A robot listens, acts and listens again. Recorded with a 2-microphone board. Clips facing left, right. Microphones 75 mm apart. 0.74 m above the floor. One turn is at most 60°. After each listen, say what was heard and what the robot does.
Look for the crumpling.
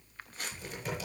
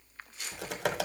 The crumpling: about 40° left or 140° left. Turn 40° left.
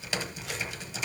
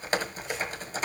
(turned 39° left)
Keep listening.
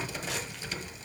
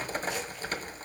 Keep listening.
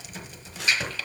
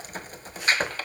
I heard crumpling, but can't make it out now. It was about 5° left or 100° left.